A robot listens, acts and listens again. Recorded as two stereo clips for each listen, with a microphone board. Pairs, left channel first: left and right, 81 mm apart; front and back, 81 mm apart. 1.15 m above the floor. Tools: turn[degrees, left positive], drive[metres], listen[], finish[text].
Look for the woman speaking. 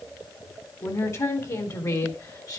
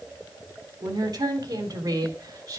Thought: The woman speaking: 135° left.
Action: turn[135]
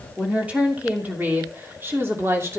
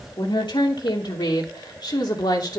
Thought: The woman speaking is now 35° right.
Action: turn[-35]
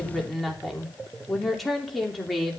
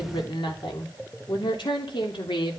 Action: finish[Facing the woman speaking, 2 to 4 m away.]